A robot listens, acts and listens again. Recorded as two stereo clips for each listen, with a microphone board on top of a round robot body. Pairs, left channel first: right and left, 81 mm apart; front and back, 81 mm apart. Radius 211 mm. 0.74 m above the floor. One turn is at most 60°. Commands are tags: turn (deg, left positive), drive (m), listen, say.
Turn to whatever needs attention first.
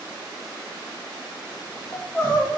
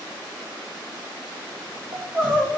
<turn deg="-60"/>
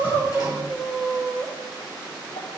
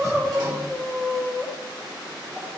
<turn deg="-60"/>
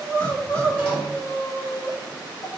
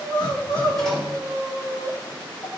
<turn deg="-40"/>
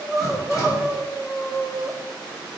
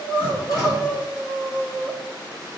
<say>Found it: crying, straight ahead.</say>